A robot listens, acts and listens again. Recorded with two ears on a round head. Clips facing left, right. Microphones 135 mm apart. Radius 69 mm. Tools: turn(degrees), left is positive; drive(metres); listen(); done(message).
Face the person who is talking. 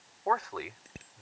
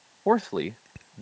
turn(degrees=-35)
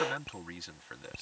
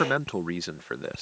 turn(degrees=-110)
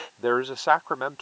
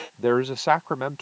done("Found it: a man speaking, straight ahead.")